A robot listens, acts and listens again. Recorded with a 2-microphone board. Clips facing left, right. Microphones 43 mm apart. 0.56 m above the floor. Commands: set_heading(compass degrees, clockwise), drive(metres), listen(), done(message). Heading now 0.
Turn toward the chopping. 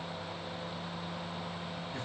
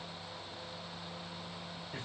listen()
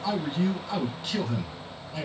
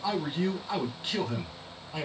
listen()
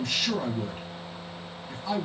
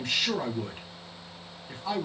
done("I can't make out chopping to turn to.")